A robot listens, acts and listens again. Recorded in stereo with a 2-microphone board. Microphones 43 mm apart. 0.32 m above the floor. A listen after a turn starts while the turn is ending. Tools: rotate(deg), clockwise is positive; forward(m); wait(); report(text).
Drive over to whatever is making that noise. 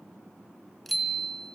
rotate(-30)
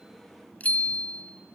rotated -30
rotate(-145)
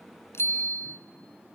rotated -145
rotate(-55)
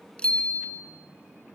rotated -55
rotate(-25)
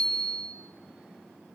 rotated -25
forward(1.0)
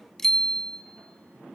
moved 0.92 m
rotate(-10)
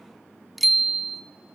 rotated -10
forward(1.0)
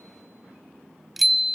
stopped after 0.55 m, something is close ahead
report("I am next to the bicycle bell.")